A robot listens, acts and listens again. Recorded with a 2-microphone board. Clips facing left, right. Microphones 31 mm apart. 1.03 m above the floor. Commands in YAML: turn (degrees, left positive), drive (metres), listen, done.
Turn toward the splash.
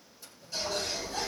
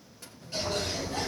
turn: -90
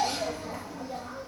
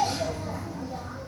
done: "I heard a splash from this way, but can't make it out now."